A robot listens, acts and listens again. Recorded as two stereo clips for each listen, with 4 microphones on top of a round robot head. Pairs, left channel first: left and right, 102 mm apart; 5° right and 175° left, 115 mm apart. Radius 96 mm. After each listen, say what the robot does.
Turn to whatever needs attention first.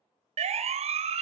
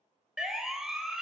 Turn 100° right.
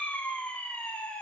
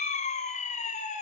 Turn 10° left.
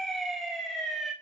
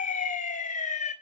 Facing the siren.